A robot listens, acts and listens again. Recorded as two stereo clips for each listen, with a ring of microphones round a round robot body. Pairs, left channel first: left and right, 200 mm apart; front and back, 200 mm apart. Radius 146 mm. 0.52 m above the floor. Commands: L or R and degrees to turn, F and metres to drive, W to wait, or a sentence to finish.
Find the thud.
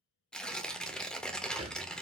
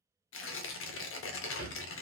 R30
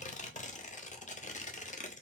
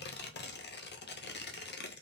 I heard a thud from this way, but can't make it out now.